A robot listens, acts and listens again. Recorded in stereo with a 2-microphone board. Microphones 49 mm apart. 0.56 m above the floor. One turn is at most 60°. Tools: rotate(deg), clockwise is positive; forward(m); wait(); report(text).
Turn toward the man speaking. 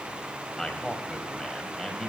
rotate(-30)
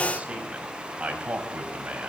rotate(30)
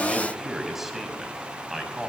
rotate(10)
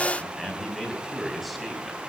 report("Facing the man speaking.")